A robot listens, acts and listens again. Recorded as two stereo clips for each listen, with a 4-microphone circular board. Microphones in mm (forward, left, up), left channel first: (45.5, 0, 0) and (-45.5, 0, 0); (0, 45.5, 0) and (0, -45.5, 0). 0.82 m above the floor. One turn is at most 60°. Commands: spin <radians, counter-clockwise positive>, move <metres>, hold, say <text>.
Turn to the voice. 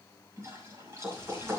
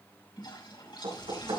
spin 1.05
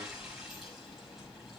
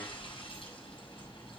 spin 0.96
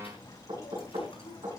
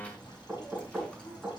spin 0.26
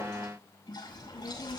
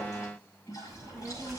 say Facing the child speaking.